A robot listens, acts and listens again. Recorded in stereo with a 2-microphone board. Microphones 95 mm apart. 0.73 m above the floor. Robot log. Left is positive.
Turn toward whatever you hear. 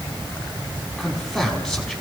cmd yaw +30
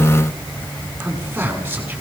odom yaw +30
note: So it is at 20° right.
cmd yaw -20
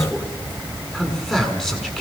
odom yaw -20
end: Found it: a man speaking, straight ahead.